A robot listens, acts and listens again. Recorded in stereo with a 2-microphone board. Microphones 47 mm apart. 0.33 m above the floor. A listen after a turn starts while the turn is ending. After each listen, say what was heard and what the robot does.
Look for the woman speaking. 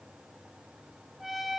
Keep listening.
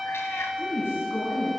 The woman speaking: about 55° left or 125° left. Turn 55° left.
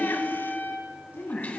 So it is at 65° left. Turn 65° left.
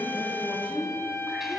The woman speaking is now 25° left. Turn 25° left.
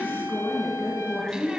The woman speaking is now 15° left. Turn 15° left.
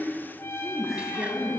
Found it: a woman speaking, straight ahead.